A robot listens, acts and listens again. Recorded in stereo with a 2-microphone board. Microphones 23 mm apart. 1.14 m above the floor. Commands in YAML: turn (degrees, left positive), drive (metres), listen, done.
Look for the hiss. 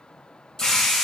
turn: 20
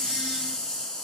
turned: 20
turn: 140
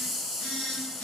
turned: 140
done: "Found it: a hiss, straight ahead."